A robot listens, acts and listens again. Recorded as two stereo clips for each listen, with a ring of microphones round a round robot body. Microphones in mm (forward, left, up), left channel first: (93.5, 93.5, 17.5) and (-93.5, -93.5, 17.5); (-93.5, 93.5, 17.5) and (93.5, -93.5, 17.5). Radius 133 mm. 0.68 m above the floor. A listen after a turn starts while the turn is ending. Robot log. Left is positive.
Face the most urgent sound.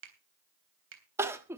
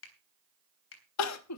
note: The crying: 145° left.
cmd yaw +145
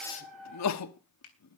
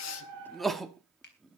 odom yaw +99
note: The crying is now 45° left.
cmd yaw +45
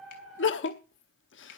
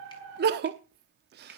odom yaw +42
end: Found it: crying, straight ahead.